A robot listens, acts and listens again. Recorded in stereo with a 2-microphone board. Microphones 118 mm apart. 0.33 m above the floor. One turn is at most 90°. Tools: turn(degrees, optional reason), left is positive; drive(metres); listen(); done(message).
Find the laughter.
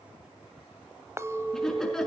turn(degrees=30)
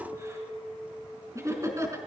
turn(degrees=-25, reason="So it is at 25° right.")
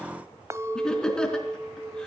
done("Facing the laughter, over 4 m away.")